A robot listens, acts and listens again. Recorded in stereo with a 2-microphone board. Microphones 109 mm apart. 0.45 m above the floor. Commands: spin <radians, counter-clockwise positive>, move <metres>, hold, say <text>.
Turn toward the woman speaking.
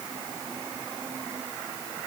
hold
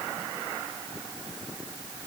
hold
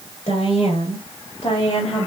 spin 0.96
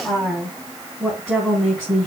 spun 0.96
say Found it: a woman speaking, straight ahead.